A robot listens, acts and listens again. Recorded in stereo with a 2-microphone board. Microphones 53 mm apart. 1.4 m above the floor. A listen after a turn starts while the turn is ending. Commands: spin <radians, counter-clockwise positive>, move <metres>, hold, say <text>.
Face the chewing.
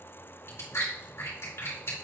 spin 0.87
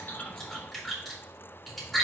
say Found it: chewing, straight ahead.